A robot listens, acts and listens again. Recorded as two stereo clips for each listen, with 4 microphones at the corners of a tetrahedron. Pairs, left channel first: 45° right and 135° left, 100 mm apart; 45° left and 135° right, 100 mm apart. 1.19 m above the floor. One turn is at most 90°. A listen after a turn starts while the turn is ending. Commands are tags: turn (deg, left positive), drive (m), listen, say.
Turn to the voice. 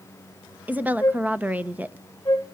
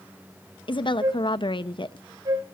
<turn deg="65"/>
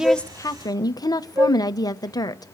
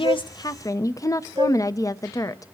<say>Found it: a woman speaking, straight ahead.</say>